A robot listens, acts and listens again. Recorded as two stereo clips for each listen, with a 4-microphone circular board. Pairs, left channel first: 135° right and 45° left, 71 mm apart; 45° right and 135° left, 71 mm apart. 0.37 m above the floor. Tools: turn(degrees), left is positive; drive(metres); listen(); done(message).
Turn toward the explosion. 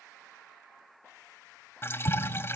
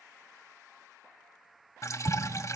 turn(degrees=-120)
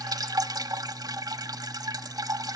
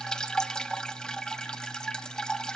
done("I heard an explosion from this way, but can't make it out now.")